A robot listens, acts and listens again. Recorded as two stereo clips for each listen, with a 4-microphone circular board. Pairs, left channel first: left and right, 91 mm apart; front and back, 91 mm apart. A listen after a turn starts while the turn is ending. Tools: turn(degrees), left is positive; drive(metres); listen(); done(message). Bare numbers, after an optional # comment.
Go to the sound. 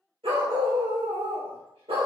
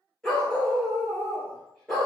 # The dog barking: 85° right.
turn(-85)
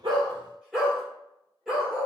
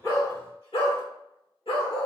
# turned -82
drive(1.0)
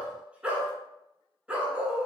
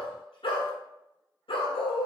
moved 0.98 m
# The dog barking is now 15° right.
turn(-15)
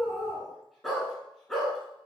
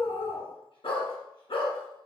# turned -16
drive(1.0)
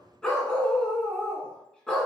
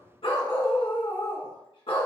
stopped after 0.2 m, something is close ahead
# The dog barking is now 10° left.
turn(10)
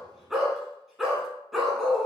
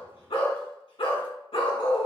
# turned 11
done("Arrived at the dog barking, straight ahead.")